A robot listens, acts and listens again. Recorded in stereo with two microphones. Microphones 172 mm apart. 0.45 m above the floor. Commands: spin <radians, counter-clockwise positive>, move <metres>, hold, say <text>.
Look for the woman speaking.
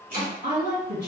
spin -1.05
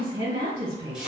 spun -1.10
spin -0.61
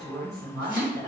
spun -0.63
say Found it: a woman speaking, straight ahead.